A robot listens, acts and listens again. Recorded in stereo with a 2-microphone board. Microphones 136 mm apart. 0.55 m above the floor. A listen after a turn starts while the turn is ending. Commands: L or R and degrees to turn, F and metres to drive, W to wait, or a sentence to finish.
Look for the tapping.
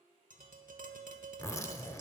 R75
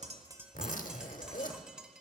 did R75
Facing the tapping.